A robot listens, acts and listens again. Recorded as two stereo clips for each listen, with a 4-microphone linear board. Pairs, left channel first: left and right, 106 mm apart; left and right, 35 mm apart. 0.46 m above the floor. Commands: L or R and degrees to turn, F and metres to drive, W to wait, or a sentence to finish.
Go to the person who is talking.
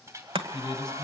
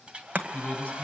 L40
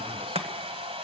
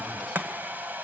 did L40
W
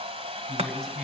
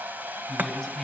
F1.0
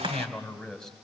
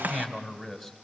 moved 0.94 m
F1.0
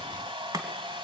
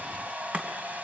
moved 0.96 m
W
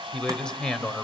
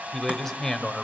L10
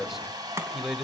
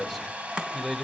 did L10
F1.0
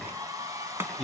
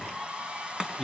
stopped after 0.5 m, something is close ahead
I am next to the man speaking.